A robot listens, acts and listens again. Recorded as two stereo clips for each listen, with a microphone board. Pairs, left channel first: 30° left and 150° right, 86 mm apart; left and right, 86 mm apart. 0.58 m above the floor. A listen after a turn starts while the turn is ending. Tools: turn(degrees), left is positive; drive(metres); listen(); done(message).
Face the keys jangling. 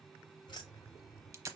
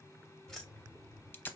turn(degrees=15)
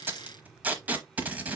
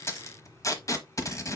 listen()
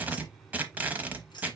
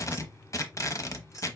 turn(degrees=45)
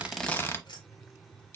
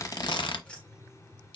turn(degrees=20)
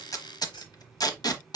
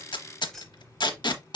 turn(degrees=10)
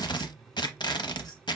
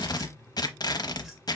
done("Facing the keys jangling, 1 to 2 m away.")